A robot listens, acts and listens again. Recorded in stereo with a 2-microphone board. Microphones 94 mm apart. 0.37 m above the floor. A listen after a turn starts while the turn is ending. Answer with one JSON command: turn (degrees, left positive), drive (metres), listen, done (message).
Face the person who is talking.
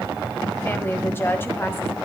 {"turn": 25}
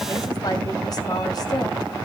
{"turn": 125}
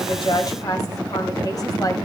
{"turn": 50}
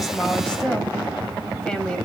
{"turn": 10}
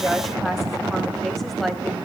{"done": "Facing the woman speaking, 1 to 2 m away."}